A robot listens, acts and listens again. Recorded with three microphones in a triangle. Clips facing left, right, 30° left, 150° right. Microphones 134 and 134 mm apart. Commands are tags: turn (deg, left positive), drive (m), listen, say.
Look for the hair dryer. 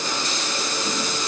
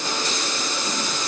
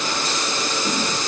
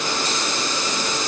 <listen/>
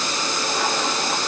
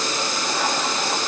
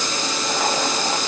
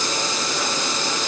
<listen/>
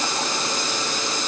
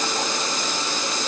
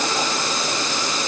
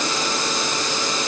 <say>I can't make out a hair dryer to turn to.</say>